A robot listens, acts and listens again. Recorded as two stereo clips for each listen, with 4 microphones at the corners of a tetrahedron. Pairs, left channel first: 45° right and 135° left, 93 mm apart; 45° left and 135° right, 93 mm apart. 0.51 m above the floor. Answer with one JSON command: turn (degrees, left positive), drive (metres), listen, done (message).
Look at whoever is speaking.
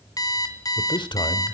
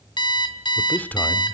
{"turn": -25}
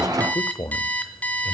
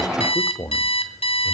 {"done": "Found it: a man speaking, straight ahead."}